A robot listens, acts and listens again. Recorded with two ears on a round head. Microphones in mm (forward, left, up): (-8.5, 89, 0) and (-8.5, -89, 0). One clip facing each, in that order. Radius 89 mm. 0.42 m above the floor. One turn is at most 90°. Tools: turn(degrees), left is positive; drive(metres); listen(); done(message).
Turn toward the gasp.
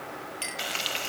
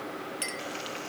listen()
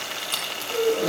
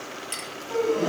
turn(degrees=-75)
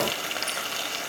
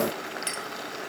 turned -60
listen()
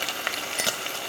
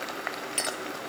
done("I heard a gasp, but can't make it out now. It was about 15° right or 45° right.")